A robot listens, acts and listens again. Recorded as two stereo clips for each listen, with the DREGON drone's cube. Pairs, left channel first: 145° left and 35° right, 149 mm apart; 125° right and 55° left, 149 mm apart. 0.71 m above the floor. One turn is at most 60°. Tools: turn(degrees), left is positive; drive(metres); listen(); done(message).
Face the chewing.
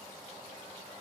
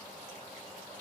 listen()
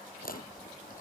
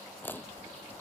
turn(degrees=60)
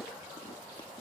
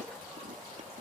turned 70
turn(degrees=60)
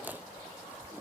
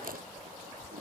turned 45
turn(degrees=45)
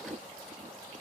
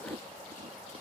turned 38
done("Facing the chewing.")